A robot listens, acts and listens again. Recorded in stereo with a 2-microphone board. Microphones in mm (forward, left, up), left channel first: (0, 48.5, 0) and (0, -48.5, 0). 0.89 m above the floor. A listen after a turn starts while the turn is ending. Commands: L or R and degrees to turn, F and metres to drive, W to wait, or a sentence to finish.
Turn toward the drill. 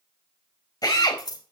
L40
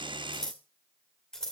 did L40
W
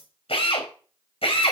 L100
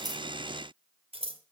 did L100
W
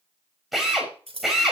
Facing the drill.